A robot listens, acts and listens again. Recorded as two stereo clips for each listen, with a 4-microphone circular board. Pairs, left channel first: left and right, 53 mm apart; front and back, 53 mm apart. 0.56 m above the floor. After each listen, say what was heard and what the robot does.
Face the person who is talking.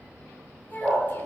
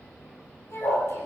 The child speaking: 40° left. Turn 40° left.
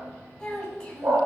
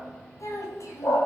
The child speaking is now 15° left. Turn 15° left.
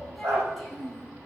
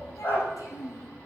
Facing the child speaking.